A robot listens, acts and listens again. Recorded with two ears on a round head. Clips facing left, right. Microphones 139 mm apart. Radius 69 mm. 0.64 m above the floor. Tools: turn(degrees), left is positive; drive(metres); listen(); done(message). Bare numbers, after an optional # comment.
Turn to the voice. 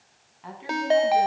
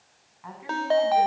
# The woman speaking: about 35° left or 145° left.
turn(35)
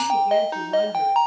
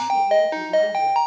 listen()
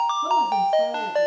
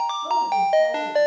listen()
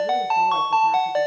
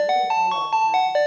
done("I heard a woman speaking, but can't make it out now. It was about straight ahead or 110° left.")